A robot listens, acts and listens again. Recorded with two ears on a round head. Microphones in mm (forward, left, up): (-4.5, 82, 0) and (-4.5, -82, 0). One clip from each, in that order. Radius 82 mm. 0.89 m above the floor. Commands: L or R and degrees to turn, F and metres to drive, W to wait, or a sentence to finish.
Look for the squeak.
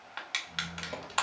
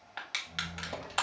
R30
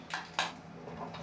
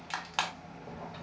L20
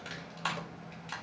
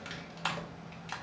Found it: a squeak, straight ahead.